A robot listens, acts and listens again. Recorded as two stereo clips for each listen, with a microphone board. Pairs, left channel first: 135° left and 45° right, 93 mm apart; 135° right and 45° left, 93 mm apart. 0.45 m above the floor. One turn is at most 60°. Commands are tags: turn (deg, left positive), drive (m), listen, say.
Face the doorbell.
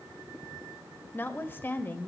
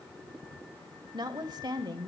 <listen/>
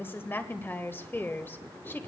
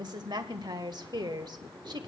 <listen/>
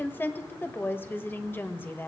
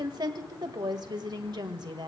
<say>I can't make out a doorbell to turn to.</say>